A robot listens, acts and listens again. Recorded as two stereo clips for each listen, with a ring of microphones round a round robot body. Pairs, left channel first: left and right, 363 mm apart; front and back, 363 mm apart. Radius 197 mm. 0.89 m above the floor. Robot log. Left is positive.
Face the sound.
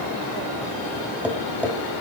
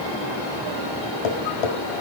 end: Found it: tapping, straight ahead, 2 to 4 m away.